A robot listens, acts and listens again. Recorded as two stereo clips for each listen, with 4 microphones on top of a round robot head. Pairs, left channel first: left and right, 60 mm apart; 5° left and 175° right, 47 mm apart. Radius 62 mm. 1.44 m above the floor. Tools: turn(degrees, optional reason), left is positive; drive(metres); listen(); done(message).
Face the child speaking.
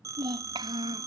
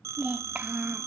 turn(degrees=-100, reason="The child speaking: 100° right.")
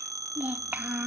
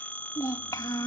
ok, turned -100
turn(degrees=-25, reason="The child speaking is now 25° right.")
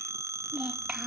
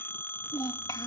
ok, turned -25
turn(degrees=-15, reason="The child speaking is now 15° right.")
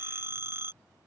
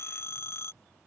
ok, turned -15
listen()
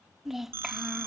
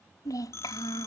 done("Found it: a child speaking, straight ahead.")